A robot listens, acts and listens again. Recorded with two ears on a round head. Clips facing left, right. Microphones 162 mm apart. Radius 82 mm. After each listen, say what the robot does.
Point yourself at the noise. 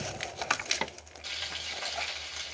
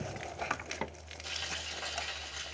Turn 15° left.
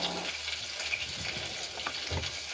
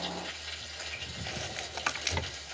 Turn 150° left.
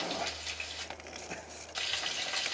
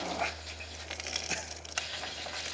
Turn 30° left.
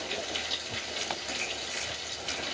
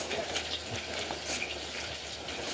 Turn 20° left.
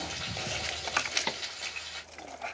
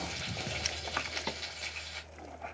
Facing the frying, 2 to 4 m away.